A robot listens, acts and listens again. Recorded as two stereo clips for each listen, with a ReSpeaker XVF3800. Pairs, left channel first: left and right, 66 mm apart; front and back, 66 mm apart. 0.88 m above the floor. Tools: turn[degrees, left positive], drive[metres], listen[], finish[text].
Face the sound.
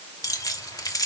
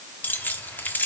Thought: The keys jangling: 60° left.
Action: turn[60]
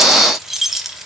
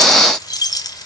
Action: finish[Facing the keys jangling.]